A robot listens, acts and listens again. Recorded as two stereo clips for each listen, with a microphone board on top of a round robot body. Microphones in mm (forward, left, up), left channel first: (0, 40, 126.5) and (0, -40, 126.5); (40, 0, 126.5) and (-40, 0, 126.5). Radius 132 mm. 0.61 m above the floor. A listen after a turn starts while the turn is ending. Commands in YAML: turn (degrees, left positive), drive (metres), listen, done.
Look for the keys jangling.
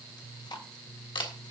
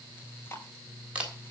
listen: true
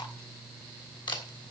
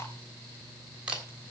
listen: true
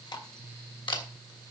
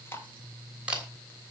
done: "I can't make out keys jangling to turn to."